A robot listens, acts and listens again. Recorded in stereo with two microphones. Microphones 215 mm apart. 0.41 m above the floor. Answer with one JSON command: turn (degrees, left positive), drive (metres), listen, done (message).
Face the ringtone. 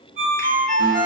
{"turn": -40}
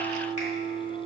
{"listen": true}
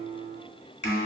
{"listen": true}
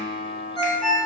{"done": "Found it: a ringtone, straight ahead."}